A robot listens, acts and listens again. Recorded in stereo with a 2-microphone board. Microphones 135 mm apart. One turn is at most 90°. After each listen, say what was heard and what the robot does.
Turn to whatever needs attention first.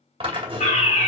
The fire alarm: about 65° left or 115° left. Turn 65° left.
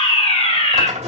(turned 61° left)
So it is at 45° left. Turn 45° left.
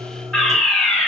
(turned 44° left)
Facing the fire alarm, 2 to 4 m away.